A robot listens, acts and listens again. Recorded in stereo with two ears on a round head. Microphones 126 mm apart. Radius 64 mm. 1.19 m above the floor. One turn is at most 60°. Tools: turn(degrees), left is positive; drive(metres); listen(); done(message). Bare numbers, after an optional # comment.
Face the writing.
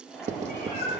# The writing: about 55° right or 125° right.
turn(-55)
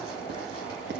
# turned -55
listen()
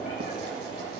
listen()
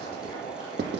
# So it is at 75° right.
turn(-60)
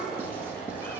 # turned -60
# Nothing new. It was at 15° right.
turn(-15)
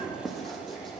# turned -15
done("Facing the writing, 1 to 2 m away.")